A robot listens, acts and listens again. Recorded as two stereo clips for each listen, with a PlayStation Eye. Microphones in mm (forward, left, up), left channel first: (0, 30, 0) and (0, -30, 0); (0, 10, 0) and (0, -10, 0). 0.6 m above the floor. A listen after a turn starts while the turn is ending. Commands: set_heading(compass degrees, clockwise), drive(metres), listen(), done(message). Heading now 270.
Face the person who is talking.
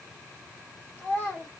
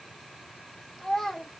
set_heading(235)
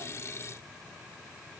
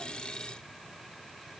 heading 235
listen()
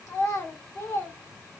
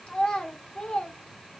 set_heading(125)
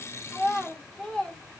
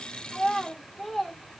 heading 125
done("Found it: a child speaking, straight ahead, 1 to 2 m away.")